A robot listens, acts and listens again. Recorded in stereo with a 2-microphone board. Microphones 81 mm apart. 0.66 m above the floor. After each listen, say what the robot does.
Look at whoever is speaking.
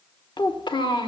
Turn 75° left.
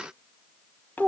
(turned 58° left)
Turn 25° left.
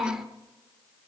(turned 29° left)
Found it: a child speaking, straight ahead, 1 to 2 m away.